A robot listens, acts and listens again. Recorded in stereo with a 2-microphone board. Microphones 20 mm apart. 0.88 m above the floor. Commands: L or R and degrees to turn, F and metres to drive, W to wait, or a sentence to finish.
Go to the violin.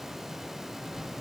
W
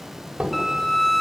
L30
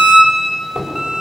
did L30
R25
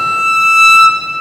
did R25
F1.0
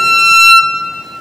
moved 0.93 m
F1.0
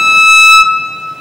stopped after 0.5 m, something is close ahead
R10
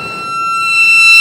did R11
Arrived at the violin, straight ahead.